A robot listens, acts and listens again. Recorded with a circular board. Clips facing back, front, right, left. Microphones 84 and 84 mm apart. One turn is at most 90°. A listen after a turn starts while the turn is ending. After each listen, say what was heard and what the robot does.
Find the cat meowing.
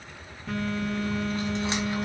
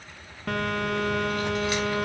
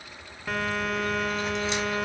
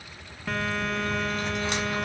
Keep listening.
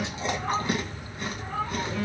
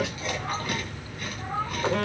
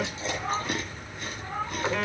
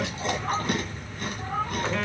The cat meowing: 65° left. Turn 65° left.
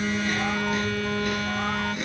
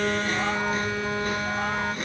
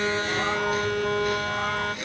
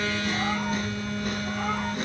Keep listening.
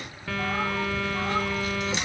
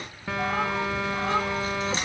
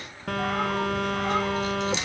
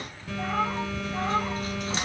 Keep listening.
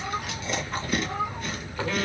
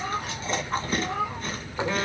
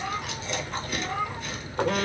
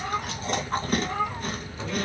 Found it: a cat meowing, straight ahead.